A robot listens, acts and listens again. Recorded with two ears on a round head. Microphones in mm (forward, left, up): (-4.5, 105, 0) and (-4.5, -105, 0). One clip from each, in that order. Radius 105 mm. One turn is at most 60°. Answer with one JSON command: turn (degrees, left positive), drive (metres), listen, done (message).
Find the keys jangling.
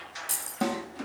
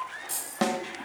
{"turn": 30}
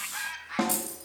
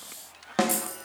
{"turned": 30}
{"turn": -10}
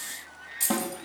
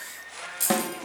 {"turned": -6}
{"turn": -10}
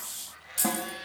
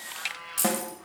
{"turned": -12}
{"done": "Facing the keys jangling."}